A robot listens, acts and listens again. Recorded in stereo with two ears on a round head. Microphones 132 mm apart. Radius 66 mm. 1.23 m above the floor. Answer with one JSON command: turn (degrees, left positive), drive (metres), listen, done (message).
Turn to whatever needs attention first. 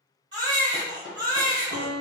{"turn": -30}
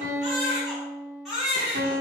{"done": "Found it: a baby crying, straight ahead."}